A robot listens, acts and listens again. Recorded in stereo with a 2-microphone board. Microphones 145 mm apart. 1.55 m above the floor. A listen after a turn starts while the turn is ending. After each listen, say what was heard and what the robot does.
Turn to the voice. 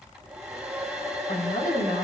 Turn 90° left.
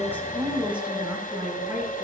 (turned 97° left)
So it is at 10° right. Turn 10° right.
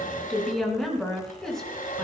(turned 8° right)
Facing the woman speaking, over 4 m away.